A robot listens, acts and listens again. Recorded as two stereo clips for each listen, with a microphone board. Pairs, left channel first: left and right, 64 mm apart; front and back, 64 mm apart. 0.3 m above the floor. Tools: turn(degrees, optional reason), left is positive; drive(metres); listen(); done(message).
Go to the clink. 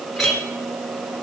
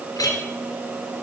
drive(metres=1.0)
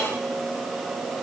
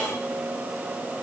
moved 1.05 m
listen()
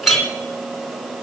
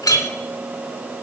drive(metres=1.0)
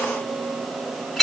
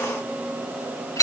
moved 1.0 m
drive(metres=1.0)
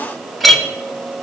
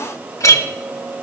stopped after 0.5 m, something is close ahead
done("I am next to the clink.")